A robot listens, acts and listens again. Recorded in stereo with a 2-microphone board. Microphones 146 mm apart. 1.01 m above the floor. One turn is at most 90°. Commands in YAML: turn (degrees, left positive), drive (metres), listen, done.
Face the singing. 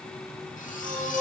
turn: -60
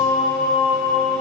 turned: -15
turn: -70
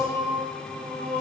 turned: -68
turn: -45
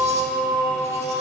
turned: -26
turn: -20
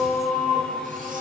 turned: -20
done: "Found it: singing, straight ahead, over 4 m away."